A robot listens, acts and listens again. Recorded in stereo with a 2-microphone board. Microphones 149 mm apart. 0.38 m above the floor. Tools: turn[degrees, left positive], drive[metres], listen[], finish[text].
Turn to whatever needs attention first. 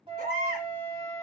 Action: turn[-90]
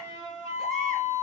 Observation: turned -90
Action: listen[]
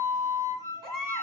Action: finish[Facing the baby crying, 1 to 2 m away.]